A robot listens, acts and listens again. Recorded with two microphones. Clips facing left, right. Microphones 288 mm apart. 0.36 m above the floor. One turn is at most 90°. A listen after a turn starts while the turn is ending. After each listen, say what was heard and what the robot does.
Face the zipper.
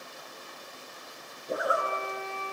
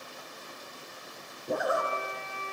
The zipper: about 50° right or 130° right. Turn 50° right.
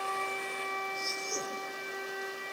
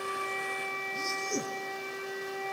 So it is at 75° right. Turn 75° right.
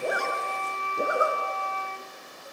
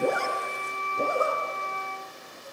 The zipper is now 15° left. Turn 15° left.
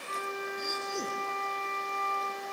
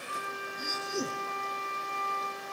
Facing the zipper.